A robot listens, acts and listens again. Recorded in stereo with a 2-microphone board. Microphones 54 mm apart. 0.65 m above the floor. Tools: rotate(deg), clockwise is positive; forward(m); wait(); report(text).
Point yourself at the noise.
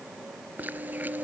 rotate(35)
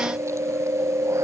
rotate(110)
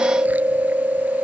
rotate(30)
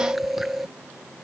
report("Found it: chewing, straight ahead.")